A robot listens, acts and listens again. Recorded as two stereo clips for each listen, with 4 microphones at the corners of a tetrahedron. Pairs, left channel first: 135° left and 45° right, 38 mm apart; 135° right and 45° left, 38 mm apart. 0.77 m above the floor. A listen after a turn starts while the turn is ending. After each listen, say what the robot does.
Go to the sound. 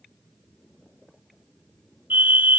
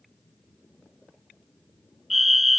Turn 40° right.
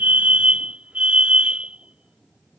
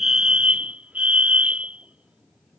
Drive 1.0 m forward.
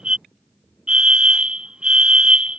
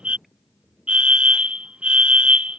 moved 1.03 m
Drive 1.0 m forward.
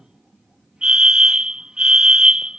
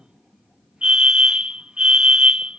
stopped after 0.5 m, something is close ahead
I am next to the fire alarm.